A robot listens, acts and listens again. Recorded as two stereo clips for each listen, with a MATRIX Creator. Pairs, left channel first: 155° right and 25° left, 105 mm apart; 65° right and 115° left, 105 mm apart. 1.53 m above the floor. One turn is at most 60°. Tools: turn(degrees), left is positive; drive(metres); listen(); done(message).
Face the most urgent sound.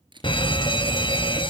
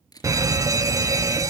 turn(degrees=60)
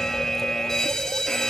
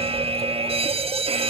turn(degrees=60)
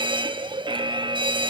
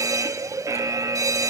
turn(degrees=55)
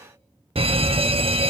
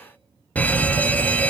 done("Found it: a fire alarm, straight ahead, 1 to 2 m away.")